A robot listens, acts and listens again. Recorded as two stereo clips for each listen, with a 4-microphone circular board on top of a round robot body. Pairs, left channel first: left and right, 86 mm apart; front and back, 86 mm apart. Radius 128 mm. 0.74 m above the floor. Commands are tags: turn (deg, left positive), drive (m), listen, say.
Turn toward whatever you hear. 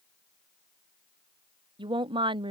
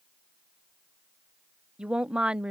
<turn deg="-100"/>
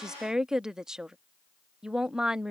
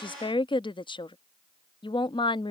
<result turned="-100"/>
<say>Found it: a woman speaking, straight ahead.</say>